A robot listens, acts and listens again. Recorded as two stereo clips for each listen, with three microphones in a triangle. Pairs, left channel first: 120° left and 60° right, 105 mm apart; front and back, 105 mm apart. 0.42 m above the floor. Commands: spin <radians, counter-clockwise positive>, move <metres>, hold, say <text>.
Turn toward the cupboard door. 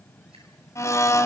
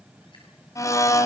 hold
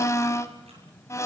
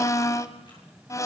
hold
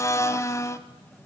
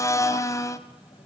say I can't make out a cupboard door, only a blender.